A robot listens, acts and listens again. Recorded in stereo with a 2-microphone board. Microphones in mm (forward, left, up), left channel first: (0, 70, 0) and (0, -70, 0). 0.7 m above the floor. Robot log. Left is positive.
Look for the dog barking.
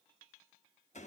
cmd idle
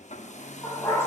note: The dog barking: about 15° left or 165° left.
cmd yaw +15
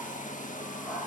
end: Facing the dog barking.